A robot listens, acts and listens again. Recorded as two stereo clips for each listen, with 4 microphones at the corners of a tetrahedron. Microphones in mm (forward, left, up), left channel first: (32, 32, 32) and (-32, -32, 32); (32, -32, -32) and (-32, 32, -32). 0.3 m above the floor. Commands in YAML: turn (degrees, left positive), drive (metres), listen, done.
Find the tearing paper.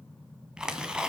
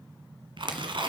turn: 145
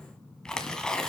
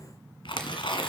turn: -35
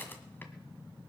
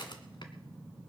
turn: -20
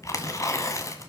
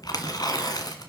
done: "Facing the tearing paper."